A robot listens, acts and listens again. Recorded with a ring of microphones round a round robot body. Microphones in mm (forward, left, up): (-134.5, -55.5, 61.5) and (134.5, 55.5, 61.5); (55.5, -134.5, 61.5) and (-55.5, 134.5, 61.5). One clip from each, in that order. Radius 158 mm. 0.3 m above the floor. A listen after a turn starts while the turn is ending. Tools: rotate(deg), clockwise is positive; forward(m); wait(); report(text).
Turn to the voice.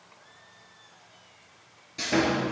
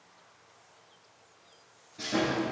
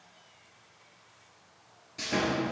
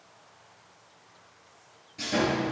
wait()
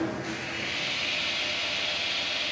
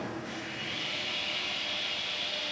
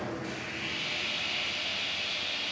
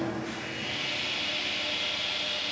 wait()
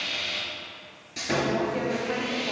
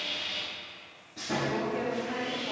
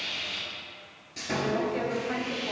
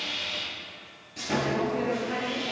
rotate(85)
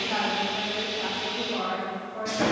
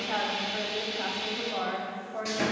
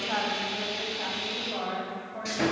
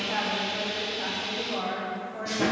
rotate(-20)
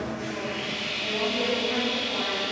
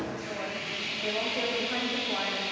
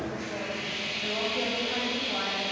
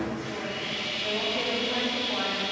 wait()
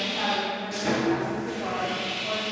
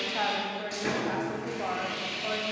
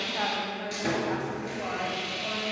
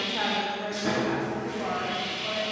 report("Found it: a woman speaking, straight ahead.")